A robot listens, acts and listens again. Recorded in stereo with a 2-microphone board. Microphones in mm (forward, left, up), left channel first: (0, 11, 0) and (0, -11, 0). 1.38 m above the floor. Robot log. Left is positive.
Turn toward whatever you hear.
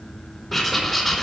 note: The writing: about 20° left or 160° left.
cmd yaw +20
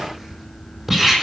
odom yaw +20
end: Found it: writing, straight ahead, over 4 m away.